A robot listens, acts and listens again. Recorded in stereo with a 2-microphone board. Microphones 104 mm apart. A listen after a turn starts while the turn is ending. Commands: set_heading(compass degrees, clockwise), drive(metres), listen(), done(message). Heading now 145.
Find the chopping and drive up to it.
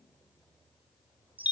listen()
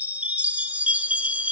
listen()
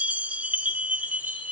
done("I can't make out chopping to turn to.")